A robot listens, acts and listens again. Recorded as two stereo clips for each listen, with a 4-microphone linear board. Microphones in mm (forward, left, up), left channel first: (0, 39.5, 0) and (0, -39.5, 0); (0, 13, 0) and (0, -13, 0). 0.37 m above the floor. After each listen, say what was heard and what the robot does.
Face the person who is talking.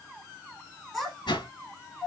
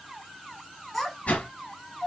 Turn 30° left.
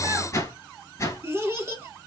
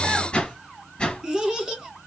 So it is at 30° right. Turn 30° right.
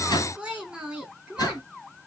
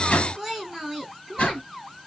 The child speaking is now 15° right. Turn 15° right.
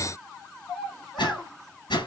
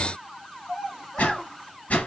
Found it: a child speaking, straight ahead, 2 to 4 m away.